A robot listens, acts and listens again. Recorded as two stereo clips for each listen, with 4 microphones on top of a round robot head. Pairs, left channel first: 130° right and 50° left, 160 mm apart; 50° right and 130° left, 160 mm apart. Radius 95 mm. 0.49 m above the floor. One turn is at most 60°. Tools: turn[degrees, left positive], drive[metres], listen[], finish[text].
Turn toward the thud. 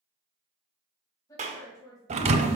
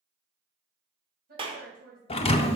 Action: finish[Facing the thud, under 1 m away.]